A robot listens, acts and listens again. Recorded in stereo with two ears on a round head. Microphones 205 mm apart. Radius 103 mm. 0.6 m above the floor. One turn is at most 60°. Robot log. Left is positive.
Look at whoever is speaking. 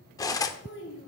note: The child speaking: about 55° left or 125° left.
cmd yaw +55
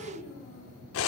note: So it is at 70° left.
cmd yaw +60
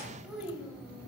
end: Facing the child speaking.